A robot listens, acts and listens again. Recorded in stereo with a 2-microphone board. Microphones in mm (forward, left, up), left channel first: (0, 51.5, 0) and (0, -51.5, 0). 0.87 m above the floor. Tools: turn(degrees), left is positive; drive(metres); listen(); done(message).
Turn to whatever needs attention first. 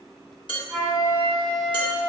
listen()
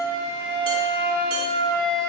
listen()
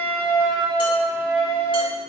done("I can't make out anything urgent, only a flute and dishes clattering.")